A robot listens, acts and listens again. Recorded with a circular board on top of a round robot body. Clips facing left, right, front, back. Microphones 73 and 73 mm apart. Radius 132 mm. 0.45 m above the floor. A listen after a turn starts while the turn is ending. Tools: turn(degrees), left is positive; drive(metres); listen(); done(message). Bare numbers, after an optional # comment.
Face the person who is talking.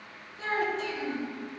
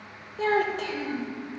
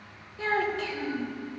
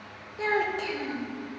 # The child speaking: 110° right.
turn(-110)
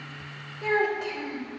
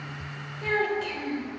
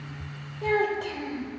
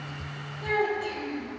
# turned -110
# The child speaking is now 15° left.
turn(15)
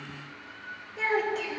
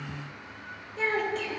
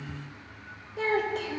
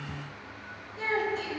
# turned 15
done("Facing the child speaking, 1 to 2 m away.")